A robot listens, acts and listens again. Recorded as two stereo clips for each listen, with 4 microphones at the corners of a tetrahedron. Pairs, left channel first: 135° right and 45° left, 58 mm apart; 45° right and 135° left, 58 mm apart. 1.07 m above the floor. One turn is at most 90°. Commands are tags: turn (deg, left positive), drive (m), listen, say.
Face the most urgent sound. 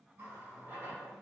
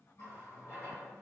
<listen/>
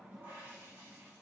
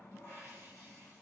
<listen/>
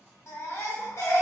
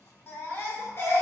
<turn deg="-90"/>
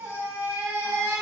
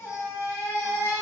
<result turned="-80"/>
<turn deg="-10"/>
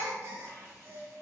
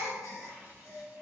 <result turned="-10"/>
<say>Facing the baby crying.</say>